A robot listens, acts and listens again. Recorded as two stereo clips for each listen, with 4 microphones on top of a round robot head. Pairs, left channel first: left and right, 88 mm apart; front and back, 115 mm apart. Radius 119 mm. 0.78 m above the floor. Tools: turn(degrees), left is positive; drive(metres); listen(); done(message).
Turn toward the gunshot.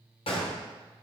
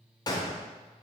turn(degrees=55)
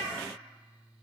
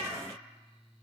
done("Facing where the gunshot came from. I can't hear it now.")